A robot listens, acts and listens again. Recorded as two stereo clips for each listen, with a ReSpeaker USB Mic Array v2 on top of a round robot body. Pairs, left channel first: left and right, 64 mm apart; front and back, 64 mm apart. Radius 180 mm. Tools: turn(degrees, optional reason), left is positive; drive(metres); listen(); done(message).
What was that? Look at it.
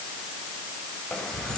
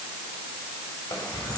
turn(degrees=15, reason="The keys jangling: 15° left.")
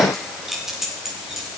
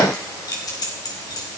done("Facing the keys jangling.")